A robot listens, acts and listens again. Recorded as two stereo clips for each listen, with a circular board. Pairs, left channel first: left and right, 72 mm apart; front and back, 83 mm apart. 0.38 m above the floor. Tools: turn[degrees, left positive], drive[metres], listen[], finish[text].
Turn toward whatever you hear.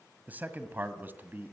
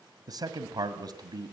Thought: The man speaking: 150° right.
Action: turn[-150]
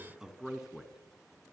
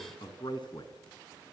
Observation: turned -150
Thought: The man speaking is now 10° right.
Action: turn[-10]
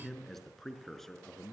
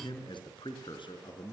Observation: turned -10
Action: finish[Found it: a man speaking, straight ahead, over 4 m away.]